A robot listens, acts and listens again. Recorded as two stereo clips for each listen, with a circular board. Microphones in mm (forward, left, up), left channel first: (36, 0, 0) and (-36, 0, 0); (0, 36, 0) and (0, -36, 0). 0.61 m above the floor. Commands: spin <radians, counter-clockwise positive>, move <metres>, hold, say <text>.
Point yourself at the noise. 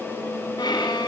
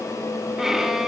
say Found it: a violin, straight ahead, 2 to 4 m away.